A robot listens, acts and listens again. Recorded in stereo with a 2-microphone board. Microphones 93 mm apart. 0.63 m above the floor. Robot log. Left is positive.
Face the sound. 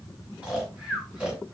cmd yaw -30
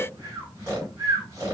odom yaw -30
note: So it is at 140° right.
cmd yaw -140
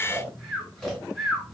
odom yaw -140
end: Facing the snoring.